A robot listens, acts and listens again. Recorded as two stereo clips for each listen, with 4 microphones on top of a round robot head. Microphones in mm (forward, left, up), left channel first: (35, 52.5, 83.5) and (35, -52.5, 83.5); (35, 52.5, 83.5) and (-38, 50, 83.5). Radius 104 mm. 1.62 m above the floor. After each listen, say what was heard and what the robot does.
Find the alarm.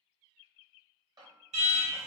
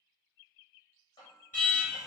The alarm: 75° right. Turn 75° right.
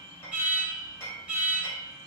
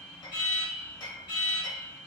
The alarm is now 15° right. Turn 15° right.
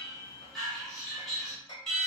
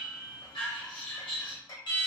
Found it: an alarm, straight ahead, 1 to 2 m away.